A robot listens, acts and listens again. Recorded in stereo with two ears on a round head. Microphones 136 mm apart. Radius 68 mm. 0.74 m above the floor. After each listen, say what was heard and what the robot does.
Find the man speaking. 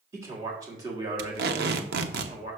The man speaking: about 35° right or 145° right. Turn 35° right.
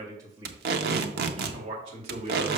The man speaking: about 40° right or 140° right. Turn 40° right.
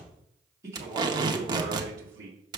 So it is at 25° right. Turn 25° right.
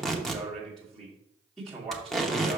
Facing the man speaking, 2 to 4 m away.